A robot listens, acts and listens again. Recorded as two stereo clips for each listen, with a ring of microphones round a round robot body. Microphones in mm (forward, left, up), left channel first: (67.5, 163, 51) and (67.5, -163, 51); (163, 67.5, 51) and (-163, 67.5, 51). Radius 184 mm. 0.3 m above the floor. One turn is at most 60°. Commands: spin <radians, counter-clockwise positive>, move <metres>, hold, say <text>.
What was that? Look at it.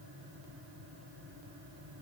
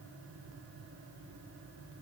hold
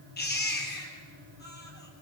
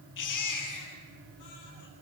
spin 0.52
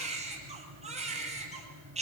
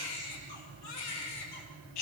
spin -0.35
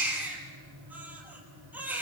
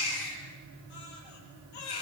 say Found it: a baby crying, straight ahead.